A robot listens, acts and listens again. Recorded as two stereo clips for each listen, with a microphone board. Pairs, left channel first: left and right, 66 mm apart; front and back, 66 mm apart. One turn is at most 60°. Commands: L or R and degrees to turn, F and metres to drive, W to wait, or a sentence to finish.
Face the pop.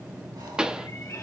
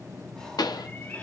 R10
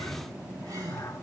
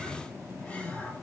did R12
I heard a pop from this way, but can't make it out now.